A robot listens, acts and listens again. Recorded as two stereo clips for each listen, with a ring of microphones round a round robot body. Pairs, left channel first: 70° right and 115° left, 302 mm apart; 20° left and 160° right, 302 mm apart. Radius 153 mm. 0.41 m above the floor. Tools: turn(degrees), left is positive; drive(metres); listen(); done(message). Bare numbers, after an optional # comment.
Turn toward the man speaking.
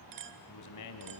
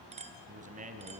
# The man speaking: 90° right.
turn(-90)
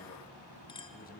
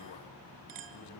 listen()
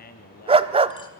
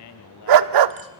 done("Found it: a man speaking, straight ahead.")